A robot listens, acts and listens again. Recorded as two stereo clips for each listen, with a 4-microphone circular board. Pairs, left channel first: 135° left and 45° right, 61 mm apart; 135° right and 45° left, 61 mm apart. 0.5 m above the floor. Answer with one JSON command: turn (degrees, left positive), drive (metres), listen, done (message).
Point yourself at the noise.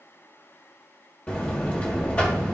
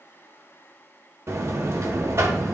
{"turn": 75}
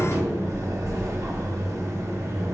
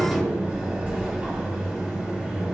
{"turn": -20}
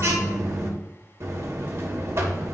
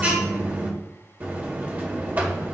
{"turn": -10}
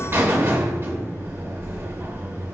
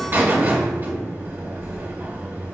{"done": "Found it: a buzzer, straight ahead."}